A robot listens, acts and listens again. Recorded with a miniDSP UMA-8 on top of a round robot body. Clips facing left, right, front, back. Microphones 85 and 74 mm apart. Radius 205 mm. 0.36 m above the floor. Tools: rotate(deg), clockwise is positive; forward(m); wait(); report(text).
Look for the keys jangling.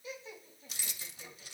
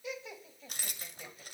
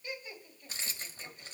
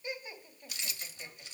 rotate(45)
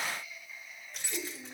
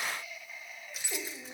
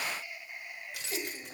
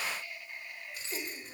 report("Facing the keys jangling, 2 to 4 m away.")